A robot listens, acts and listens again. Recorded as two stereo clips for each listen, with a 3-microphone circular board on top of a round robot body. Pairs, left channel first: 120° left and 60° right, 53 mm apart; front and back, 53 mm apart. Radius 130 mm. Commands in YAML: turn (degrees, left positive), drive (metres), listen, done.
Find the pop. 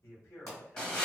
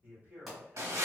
turn: 90
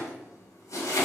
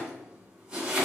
done: "Facing where the pop came from. I can't hear it now."